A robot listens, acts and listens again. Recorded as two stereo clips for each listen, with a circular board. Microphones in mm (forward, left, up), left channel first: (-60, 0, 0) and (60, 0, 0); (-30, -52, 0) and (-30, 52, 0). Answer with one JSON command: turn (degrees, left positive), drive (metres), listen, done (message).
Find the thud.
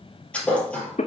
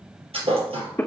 {"turn": 100}
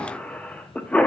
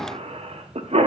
{"done": "I heard a thud from this way, but can't make it out now."}